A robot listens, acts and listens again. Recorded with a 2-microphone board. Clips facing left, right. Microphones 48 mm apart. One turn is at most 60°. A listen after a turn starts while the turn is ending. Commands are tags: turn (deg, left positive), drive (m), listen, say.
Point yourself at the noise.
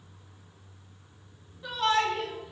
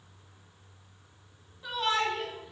<turn deg="30"/>
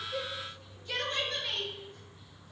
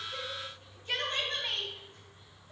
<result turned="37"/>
<turn deg="-40"/>
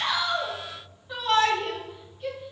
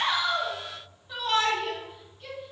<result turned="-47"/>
<turn deg="10"/>
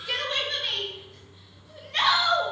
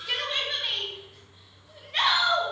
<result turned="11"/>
<say>Found it: a shout, straight ahead, 2 to 4 m away.</say>